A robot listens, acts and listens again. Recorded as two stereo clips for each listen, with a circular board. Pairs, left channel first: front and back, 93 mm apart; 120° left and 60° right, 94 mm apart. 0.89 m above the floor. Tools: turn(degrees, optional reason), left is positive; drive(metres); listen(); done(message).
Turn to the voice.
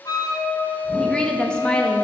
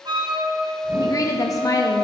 turn(degrees=80, reason="The woman speaking: 80° left.")
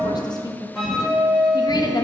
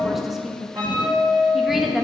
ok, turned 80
turn(degrees=25, reason="The woman speaking is now 25° left.")
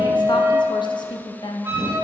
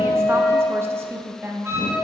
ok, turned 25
done("Facing the woman speaking, under 1 m away.")